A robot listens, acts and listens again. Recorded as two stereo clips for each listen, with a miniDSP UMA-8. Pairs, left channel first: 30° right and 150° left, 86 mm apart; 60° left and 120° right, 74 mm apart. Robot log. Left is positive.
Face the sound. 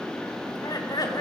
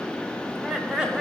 note: The laughter: 50° right.
cmd yaw -50
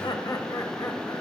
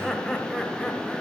note: The laughter is now 30° right.
cmd yaw -30
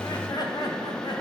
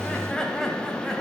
note: The laughter is now 25° right.
cmd yaw -25
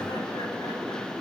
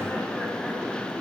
cmd idle
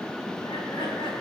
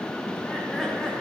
note: The laughter is now 25° right.
cmd yaw -25
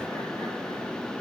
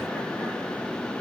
cmd idle
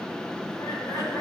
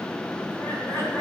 note: The laughter is now 15° left.
cmd yaw +15
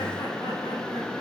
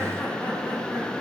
cmd idle
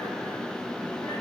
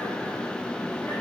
cmd idle
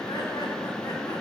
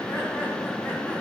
end: Facing where the laughter came from. I can't hear it now.